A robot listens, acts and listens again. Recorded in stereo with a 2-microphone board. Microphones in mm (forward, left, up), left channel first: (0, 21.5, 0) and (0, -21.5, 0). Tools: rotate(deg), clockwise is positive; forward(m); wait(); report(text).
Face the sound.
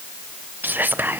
rotate(50)
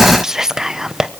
rotate(15)
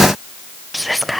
report("Facing the whispering.")